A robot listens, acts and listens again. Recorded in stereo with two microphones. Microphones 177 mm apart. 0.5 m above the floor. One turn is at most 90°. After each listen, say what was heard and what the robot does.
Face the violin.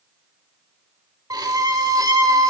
The violin: about 20° right or 160° right. Turn 20° right.
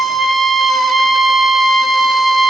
Found it: a violin, straight ahead, under 1 m away.